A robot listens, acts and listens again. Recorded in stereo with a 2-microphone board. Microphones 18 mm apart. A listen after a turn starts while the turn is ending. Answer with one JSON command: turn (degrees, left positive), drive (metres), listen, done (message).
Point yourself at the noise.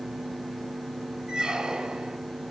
{"turn": -50}
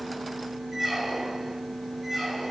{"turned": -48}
{"turn": -10}
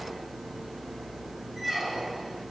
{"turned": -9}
{"done": "Found it: a squeak, straight ahead."}